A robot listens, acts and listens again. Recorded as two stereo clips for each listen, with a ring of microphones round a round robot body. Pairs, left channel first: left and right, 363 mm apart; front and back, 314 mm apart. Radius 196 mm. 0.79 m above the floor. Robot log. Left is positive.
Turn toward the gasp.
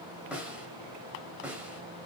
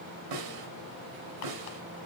cmd idle
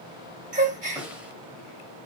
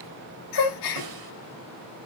note: The gasp: 20° right.
cmd yaw -20
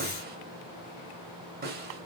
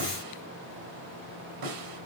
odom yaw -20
end: I heard a gasp from this way, but can't make it out now.